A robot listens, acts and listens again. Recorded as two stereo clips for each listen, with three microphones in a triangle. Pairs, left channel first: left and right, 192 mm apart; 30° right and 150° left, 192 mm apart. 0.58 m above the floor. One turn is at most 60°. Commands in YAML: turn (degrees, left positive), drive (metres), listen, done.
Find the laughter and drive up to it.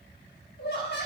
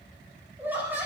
turn: 60
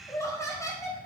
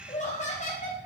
turn: 15
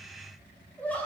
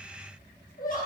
turn: 10
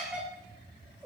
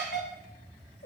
drive: 1.0
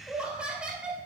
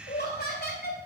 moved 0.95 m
drive: 1.0
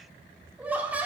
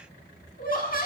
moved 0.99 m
turn: -10
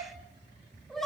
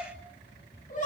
drive: 1.0
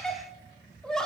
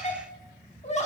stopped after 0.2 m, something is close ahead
done: "Arrived at the laughter, straight ahead."